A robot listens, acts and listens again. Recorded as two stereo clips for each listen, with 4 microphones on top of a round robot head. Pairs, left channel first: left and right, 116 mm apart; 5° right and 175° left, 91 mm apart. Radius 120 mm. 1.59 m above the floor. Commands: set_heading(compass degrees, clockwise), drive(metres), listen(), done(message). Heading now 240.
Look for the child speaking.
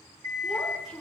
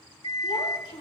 done("Facing the child speaking, 2 to 4 m away.")